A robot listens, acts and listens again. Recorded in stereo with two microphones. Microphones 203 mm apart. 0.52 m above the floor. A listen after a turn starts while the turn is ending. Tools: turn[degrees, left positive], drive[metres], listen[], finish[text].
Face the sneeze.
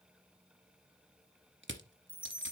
Action: listen[]
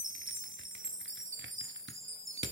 Action: listen[]
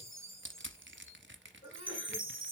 Thought: The sneeze: about 30° left or 150° left.
Action: turn[30]
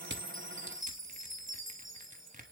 Action: listen[]
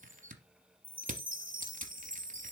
Action: finish[I heard a sneeze, but can't make it out now. It was about straight ahead or 120° left.]